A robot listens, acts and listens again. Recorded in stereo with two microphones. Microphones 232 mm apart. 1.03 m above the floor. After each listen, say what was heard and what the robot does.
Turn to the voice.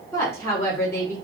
Turn 30° left.
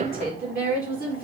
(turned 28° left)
So it is at 140° left. Turn 140° left.
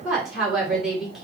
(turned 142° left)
Facing the woman speaking, 2 to 4 m away.